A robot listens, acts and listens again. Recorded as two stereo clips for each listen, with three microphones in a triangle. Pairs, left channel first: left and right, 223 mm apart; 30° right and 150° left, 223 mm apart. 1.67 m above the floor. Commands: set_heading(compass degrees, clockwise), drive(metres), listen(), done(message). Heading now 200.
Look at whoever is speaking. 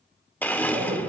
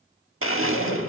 set_heading(235)
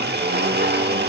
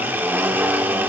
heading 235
listen()
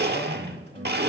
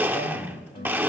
set_heading(210)
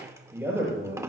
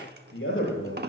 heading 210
set_heading(220)
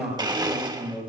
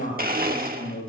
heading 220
done("Facing the man speaking.")